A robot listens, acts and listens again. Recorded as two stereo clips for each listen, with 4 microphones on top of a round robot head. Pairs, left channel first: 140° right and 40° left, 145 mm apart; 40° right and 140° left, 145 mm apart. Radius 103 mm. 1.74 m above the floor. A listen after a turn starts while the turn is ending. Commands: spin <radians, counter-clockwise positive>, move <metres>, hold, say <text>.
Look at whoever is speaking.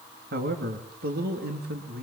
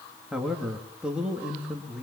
spin 0.96
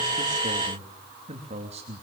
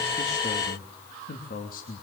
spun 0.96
spin -0.17
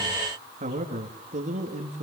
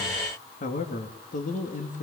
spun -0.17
say Found it: a man speaking, straight ahead.